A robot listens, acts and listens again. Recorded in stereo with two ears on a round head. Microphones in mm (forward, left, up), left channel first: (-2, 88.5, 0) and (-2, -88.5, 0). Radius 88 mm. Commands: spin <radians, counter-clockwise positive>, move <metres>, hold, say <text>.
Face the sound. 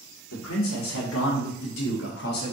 spin 0.87
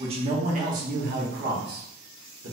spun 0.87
spin -1.13
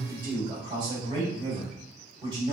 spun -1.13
spin -0.44
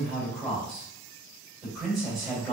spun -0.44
say Found it: a man speaking, straight ahead.